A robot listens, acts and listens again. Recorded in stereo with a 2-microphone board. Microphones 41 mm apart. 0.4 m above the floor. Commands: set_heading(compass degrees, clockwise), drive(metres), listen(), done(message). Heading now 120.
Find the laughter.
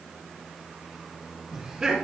set_heading(140)
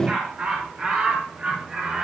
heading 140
set_heading(175)
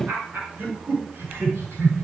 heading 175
set_heading(285)
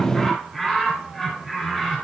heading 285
done("Found it: laughter, straight ahead, over 4 m away.")